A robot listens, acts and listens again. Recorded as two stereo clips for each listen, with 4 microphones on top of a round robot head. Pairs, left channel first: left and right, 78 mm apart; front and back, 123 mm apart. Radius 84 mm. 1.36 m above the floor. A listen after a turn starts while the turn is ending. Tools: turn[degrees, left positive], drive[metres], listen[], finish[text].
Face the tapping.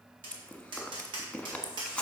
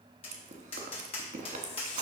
Thought: The tapping: 50° right.
Action: turn[-50]
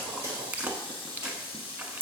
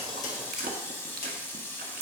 Action: listen[]
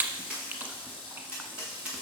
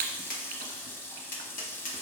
Thought: The tapping is now 10° right.
Action: turn[-10]
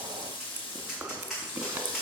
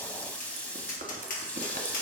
Action: finish[Found it: tapping, straight ahead, 1 to 2 m away.]